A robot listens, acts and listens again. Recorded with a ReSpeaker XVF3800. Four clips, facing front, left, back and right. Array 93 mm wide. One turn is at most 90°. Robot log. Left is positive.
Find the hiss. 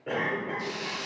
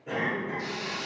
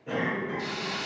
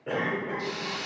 note: The hiss: 175° left.
cmd yaw +90
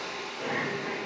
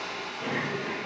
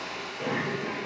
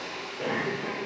note: The hiss is now 115° left.
cmd yaw +90
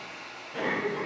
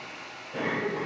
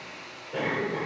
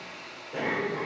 note: The hiss is now 50° left.
cmd yaw +50
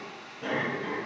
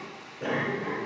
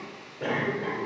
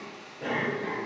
note: The hiss is now 20° left.
cmd yaw +20
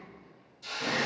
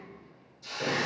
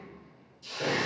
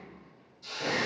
end: Facing the hiss, 1 to 2 m away.